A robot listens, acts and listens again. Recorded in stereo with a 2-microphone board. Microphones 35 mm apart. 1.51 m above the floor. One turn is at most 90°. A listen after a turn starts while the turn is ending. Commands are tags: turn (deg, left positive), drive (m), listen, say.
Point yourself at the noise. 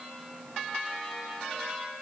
<listen/>
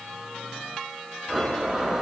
<turn deg="-30"/>
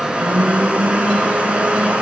<turn deg="-90"/>
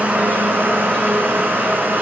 <turn deg="-80"/>
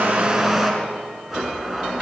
<turn deg="-10"/>
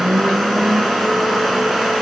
<say>Found it: a blender, straight ahead.</say>